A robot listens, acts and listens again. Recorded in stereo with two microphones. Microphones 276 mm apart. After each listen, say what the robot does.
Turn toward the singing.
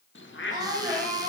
Turn 30° right.
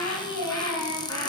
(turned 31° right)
Turn 120° right.
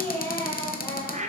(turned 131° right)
Turn 10° left.
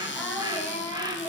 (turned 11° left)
Facing the singing.